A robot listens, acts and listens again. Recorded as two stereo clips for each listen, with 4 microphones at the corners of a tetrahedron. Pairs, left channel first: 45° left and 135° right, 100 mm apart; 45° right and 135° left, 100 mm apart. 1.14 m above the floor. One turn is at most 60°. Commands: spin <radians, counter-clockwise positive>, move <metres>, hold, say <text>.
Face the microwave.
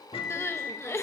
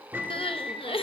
spin 1.05
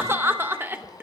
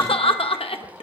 hold
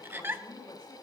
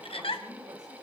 hold
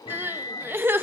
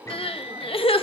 spin 0.26
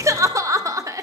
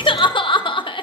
hold
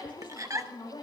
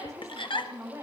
hold
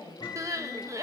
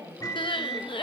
say Found it: a microwave, straight ahead, 1 to 2 m away.